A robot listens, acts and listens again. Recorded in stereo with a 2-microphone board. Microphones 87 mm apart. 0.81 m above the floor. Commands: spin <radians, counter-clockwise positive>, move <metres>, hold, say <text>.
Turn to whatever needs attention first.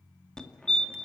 spin 0.52
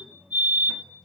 spin -0.44
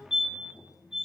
say Facing the fire alarm, 2 to 4 m away.